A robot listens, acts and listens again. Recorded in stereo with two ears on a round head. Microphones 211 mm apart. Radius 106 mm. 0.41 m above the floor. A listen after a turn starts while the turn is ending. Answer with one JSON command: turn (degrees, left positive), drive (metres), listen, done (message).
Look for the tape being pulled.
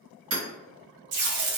{"turn": -90}
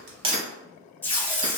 {"turn": 10}
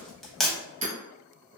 {"done": "Found it: tape being pulled, straight ahead, under 1 m away."}